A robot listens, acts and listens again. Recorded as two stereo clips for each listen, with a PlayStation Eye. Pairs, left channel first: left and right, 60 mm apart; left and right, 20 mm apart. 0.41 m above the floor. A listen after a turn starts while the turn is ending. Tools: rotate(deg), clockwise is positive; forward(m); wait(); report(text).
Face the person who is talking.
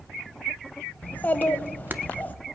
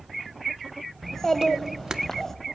rotate(-25)
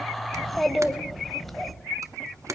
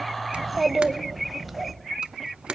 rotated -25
report("Facing the child speaking.")